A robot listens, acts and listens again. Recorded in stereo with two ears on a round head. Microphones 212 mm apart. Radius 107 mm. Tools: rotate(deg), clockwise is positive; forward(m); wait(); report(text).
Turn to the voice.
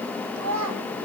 rotate(75)
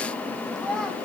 report("Facing the child speaking.")